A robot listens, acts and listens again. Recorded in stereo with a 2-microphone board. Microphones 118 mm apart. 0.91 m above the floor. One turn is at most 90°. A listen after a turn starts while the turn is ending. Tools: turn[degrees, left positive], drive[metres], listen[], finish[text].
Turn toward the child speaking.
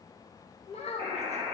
Thought: The child speaking: about 70° left or 110° left.
Action: turn[70]
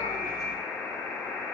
Action: listen[]
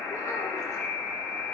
Action: listen[]
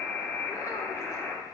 Action: finish[I heard a child speaking, but can't make it out now. It was about straight ahead or 40° left.]